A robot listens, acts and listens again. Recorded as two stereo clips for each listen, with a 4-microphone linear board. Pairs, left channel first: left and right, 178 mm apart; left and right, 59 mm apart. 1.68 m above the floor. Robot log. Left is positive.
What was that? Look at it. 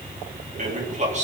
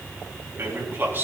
note: The man speaking: about 40° right or 140° right.
cmd yaw -40
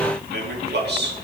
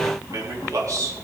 note: So it is at 115° right.
cmd yaw -115
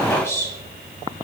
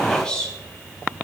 note: The man speaking is now 15° left.
cmd yaw +15
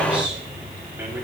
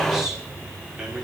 note: The man speaking is now 10° right.
cmd yaw -10
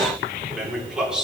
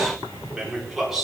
end: Found it: a man speaking, straight ahead, over 4 m away.